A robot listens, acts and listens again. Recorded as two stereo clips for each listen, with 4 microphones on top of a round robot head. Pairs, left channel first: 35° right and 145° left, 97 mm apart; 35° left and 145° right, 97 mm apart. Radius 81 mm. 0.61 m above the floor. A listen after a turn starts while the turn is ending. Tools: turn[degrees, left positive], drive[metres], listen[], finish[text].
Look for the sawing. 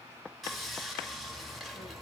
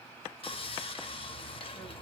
Thought: The sawing: 55° left.
Action: turn[55]
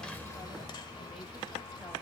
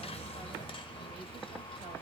Action: finish[Facing the sawing, 1 to 2 m away.]